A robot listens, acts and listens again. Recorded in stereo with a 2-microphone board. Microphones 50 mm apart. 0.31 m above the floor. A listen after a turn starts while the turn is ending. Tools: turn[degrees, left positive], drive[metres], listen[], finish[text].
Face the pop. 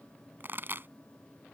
Thought: The pop: about 45° right or 135° right.
Action: turn[-45]
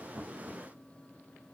Action: listen[]
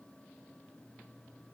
Action: finish[I heard a pop, but can't make it out now. It was about straight ahead or 90° right.]